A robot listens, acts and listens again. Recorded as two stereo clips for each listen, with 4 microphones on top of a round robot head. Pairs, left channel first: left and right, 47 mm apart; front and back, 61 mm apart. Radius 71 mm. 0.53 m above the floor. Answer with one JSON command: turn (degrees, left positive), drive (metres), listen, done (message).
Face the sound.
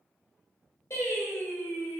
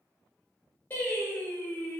{"turn": 60}
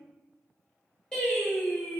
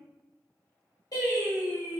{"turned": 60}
{"turn": 15}
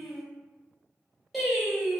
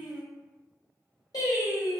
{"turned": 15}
{"done": "Found it: singing, straight ahead."}